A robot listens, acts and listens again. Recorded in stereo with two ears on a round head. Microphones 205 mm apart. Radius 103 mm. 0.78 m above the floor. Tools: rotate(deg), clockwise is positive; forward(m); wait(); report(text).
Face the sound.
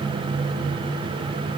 wait()
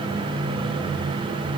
wait()
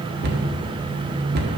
rotate(45)
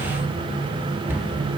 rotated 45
rotate(10)
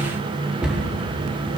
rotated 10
report("Facing the cupboard door, 1 to 2 m away.")